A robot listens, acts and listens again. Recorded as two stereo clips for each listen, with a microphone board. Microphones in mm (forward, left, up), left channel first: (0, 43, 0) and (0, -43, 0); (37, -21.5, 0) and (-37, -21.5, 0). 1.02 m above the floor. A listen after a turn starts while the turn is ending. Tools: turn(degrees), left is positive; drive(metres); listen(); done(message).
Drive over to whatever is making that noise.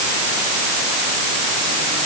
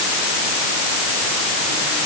listen()
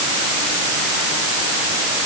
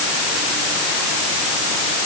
listen()
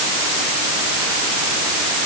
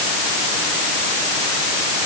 done("I can't make out anything.")